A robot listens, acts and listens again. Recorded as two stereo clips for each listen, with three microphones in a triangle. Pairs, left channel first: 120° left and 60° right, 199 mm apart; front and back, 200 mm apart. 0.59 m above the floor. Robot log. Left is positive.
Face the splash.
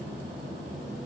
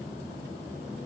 cmd idle
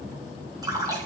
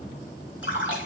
note: The splash: 10° left.
cmd yaw +10
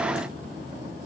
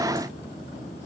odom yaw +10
end: I heard a splash from this way, but can't make it out now.